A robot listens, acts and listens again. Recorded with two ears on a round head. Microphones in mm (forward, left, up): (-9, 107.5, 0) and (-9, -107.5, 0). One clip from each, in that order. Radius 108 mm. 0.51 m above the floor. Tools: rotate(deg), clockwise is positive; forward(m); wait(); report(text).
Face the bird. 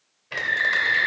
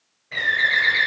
rotate(90)
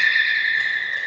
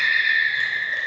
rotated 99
rotate(-10)
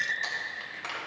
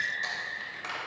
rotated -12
report("Facing the bird.")